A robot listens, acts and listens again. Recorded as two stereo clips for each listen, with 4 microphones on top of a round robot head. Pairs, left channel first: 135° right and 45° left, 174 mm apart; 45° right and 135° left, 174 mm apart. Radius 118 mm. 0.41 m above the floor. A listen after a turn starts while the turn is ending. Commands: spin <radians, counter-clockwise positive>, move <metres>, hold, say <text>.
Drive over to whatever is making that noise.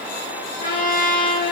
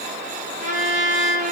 spin -3.05
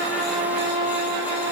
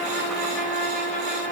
spin 0.17
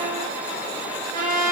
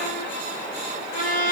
move 1.0
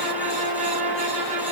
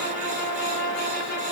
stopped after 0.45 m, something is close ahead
say Something is in my way. I am facing the trumpet but have not reached it.